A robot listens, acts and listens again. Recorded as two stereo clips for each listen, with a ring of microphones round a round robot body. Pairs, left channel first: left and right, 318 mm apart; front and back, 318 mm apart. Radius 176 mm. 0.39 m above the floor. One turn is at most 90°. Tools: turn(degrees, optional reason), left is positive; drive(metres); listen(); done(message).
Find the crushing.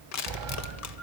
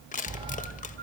turn(degrees=65, reason="The crushing: 65° left.")
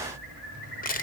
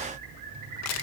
turn(degrees=30, reason="The crushing is now 30° left.")
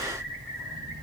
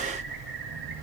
listen()
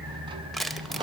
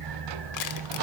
done("Found it: crushing, straight ahead.")